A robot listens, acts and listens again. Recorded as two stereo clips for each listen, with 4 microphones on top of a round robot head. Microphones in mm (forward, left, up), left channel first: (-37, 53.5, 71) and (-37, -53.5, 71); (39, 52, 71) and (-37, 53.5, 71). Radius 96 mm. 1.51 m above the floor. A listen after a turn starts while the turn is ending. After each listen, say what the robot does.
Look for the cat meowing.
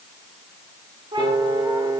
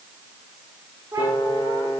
Turn 130° right.
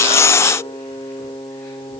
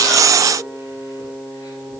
Keep listening.
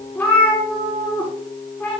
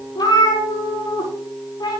Turn 15° left.
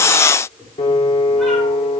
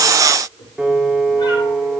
Keep listening.
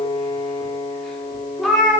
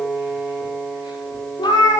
Found it: a cat meowing, straight ahead, over 4 m away.